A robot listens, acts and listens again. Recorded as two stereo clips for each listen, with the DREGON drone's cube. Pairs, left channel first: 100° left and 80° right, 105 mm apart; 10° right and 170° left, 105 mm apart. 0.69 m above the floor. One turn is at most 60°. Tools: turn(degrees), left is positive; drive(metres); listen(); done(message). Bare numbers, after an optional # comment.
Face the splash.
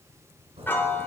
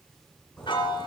# The splash: 90° right.
turn(-60)
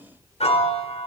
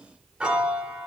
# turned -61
# Nothing new. It was at 30° right.
turn(-30)
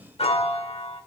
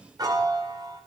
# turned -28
done("I heard a splash from this way, but can't make it out now.")